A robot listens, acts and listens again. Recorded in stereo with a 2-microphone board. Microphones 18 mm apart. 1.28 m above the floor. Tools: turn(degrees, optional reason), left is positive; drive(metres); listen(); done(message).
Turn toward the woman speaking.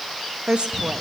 turn(degrees=-90)
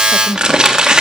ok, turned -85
turn(degrees=25, reason="So it is at 25° left.")
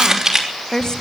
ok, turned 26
turn(degrees=35, reason="The woman speaking is now 35° left.")
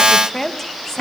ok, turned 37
turn(degrees=25, reason="The woman speaking is now 25° left.")
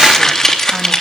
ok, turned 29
listen()
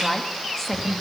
turn(degrees=15, reason="The woman speaking is now 15° left.")
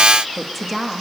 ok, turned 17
done("Found it: a woman speaking, straight ahead.")